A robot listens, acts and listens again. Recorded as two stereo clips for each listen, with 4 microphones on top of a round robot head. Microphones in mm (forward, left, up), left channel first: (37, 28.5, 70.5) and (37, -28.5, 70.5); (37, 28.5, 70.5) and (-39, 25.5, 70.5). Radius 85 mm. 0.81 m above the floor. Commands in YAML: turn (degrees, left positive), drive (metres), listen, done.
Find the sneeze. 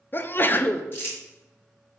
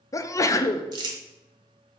turn: 45
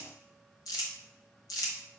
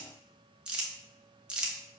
done: "Facing where the sneeze came from. I can't hear it now."